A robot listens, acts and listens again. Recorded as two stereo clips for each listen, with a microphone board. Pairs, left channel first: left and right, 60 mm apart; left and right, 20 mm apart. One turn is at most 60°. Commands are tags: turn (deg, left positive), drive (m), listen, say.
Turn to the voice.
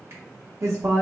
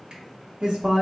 <turn deg="-60"/>
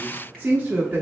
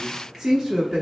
<turn deg="-35"/>
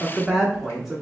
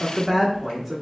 <say>Facing the woman speaking, under 1 m away.</say>